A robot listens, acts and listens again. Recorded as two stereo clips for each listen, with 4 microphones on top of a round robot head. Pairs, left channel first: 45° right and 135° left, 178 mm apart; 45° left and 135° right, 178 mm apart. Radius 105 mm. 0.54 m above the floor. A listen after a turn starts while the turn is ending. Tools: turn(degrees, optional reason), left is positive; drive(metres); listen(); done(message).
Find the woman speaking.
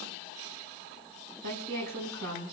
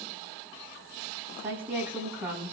turn(degrees=145, reason="The woman speaking: 145° left.")
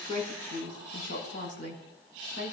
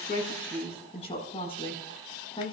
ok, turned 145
turn(degrees=-20, reason="The woman speaking is now 20° right.")
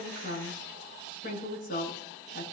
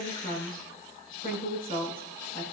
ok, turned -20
done("Facing the woman speaking.")